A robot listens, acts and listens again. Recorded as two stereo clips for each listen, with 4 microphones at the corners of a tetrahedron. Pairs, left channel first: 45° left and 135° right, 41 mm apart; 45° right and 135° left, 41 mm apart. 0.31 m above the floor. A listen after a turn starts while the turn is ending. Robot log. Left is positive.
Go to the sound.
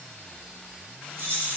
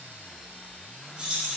note: The keys jangling: 155° right.
cmd yaw -155
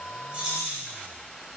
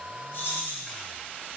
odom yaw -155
note: The keys jangling is now 50° right.
cmd yaw -50
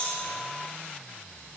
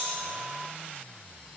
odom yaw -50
cmd idle
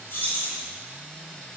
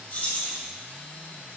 note: The keys jangling is now 10° left.
cmd yaw +10
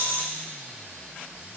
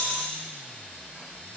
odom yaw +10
cmd fwd 1.0
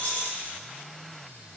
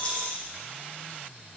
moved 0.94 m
cmd fwd 1.0
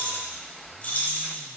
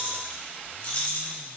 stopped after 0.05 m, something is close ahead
end: I am next to the keys jangling.